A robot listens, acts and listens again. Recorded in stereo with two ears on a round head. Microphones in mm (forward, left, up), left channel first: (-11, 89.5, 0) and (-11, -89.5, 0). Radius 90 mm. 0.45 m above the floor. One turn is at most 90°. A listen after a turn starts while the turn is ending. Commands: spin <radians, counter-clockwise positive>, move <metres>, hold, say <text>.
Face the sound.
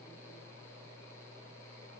hold
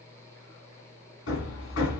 spin 1.57
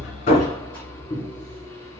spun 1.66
spin 0.17
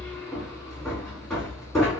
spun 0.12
say Facing the hammering.